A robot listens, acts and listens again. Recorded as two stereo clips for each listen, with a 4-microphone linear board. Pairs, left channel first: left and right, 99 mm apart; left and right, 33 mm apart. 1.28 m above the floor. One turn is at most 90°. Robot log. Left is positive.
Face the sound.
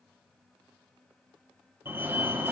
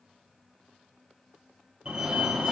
note: The fire alarm: about 25° right or 155° right.
cmd yaw -25
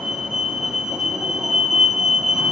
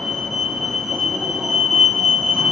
end: Found it: a fire alarm, straight ahead.